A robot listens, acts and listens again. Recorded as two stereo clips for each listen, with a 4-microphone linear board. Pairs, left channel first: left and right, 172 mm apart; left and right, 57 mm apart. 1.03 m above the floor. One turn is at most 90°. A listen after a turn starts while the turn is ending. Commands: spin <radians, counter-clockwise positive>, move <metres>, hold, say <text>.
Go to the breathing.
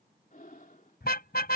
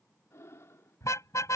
spin 1.05
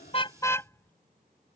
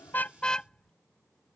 hold
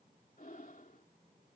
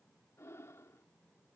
spin 1.05
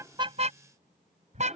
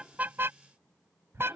move 1.0
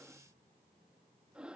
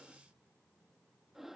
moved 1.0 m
move 1.0
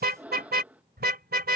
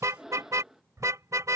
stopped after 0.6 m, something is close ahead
spin -0.17
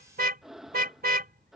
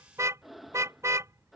say I am next to the breathing.